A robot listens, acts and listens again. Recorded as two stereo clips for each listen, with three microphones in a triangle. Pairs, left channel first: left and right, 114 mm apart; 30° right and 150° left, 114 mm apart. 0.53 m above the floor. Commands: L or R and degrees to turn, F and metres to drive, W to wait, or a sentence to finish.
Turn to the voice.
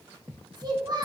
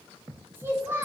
R140
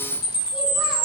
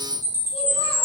W
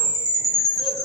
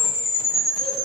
W
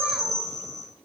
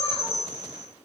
Facing where the child speaking came from. I can't hear it now.